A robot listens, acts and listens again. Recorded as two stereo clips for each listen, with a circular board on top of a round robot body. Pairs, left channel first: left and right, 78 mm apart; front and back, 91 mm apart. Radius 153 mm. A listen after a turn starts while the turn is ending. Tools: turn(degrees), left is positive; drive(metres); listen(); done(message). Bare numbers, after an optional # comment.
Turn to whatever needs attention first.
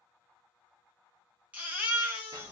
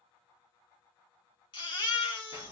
# The baby crying: 20° right.
turn(-20)
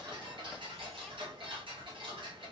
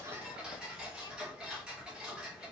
listen()
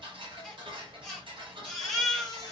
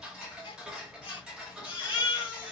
done("Facing the baby crying, 1 to 2 m away.")